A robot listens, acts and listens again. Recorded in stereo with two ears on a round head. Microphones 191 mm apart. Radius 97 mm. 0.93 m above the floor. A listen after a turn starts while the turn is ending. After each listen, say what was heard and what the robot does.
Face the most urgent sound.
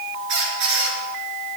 Keep listening.
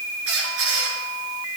Keep listening.
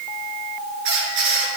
I can't make out anything urgent, only a squeak.